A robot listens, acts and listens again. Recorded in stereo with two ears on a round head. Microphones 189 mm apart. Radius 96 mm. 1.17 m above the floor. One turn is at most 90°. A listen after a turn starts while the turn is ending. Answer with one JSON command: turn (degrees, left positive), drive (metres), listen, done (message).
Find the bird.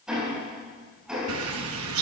{"turn": -90}
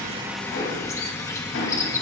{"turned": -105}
{"turn": 15}
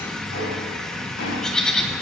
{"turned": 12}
{"done": "Found it: a bird, straight ahead."}